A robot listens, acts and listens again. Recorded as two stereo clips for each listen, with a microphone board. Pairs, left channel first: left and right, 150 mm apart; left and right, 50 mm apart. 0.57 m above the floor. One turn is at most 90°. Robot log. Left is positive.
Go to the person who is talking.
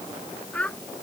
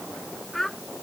cmd yaw +30
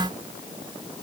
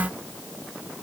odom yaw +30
cmd idle
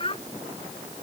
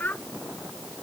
note: So it is at 140° left.
cmd yaw +90
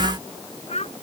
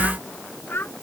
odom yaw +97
note: The child speaking is now 45° left.
cmd yaw +45
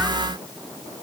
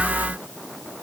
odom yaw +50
cmd idle
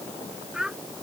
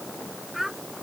cmd fwd 1.0
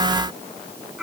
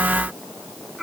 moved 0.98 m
cmd fwd 1.0
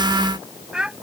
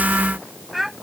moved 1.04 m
cmd fwd 1.0
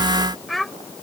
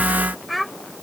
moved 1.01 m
cmd fwd 1.0
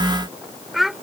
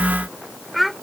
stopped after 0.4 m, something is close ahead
end: I am next to the child speaking.